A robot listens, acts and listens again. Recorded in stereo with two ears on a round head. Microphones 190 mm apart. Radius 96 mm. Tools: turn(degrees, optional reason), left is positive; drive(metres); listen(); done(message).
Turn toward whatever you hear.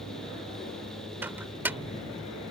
turn(degrees=-30)
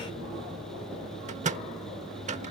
turn(degrees=-135, reason="So it is at 135° right.")
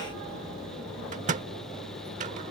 turn(degrees=-45, reason="The microwave is now 45° right.")
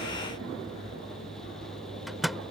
done("Found it: a microwave, straight ahead.")